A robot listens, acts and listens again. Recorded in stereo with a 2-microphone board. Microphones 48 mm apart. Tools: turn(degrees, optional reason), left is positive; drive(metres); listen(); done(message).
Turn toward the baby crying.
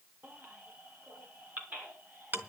turn(degrees=-35, reason="The baby crying: about 35° right or 145° right.")
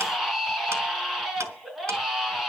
done("Facing the baby crying.")